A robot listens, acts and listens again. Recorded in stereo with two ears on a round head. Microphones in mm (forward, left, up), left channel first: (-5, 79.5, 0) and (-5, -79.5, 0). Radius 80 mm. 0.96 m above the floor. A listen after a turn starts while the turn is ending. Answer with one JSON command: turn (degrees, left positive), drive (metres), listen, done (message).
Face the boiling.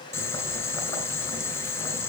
{"turn": 15}
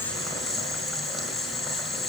{"done": "Facing the boiling."}